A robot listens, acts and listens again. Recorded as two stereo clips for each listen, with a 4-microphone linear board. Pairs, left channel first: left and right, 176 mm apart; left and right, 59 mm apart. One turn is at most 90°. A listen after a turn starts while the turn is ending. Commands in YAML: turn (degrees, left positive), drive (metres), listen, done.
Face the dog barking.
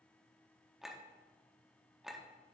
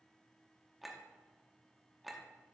listen: true
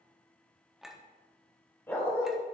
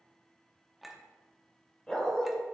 turn: 15
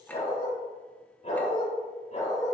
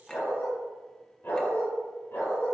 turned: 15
turn: 90
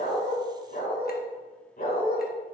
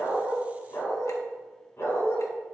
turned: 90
turn: 55
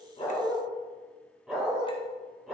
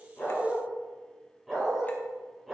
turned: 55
done: "Facing the dog barking, 2 to 4 m away."